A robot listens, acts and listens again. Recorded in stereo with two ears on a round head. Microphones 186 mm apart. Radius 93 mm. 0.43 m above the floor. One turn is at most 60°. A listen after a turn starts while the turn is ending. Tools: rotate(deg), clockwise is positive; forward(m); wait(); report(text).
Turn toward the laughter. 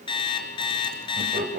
rotate(40)
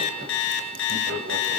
rotate(60)
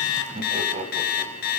rotate(35)
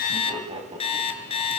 rotate(25)
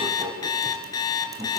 rotate(20)
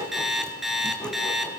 wait()
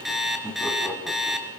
report("Found it: laughter, straight ahead, over 4 m away.")